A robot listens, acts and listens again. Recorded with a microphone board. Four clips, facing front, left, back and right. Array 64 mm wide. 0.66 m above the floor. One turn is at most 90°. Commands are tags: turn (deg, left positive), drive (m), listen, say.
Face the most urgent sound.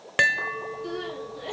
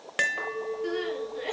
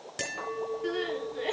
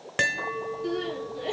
<turn deg="90"/>
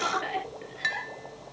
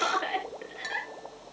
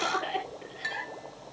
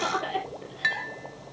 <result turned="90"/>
<turn deg="75"/>
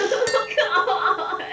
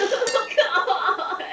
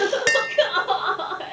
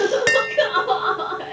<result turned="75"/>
<turn deg="15"/>
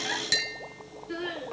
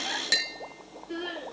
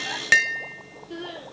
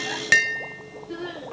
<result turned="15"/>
<say>Found it: crying, straight ahead, over 4 m away.</say>